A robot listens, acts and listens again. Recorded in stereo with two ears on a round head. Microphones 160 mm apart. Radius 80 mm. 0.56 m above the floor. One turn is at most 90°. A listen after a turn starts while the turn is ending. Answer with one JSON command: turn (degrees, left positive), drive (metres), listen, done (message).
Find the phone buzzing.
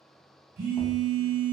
{"turn": -60}
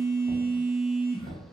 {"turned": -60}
{"done": "Facing the phone buzzing."}